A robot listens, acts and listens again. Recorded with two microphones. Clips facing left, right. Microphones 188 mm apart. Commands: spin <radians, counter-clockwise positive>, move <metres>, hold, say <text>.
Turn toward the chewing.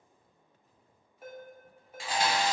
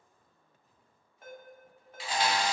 spin 0.96
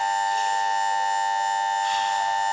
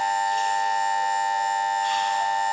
hold
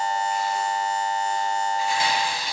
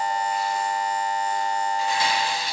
spin 0.35
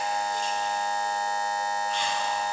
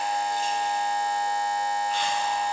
hold
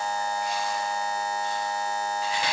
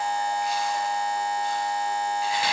say Found it: chewing, straight ahead, under 1 m away.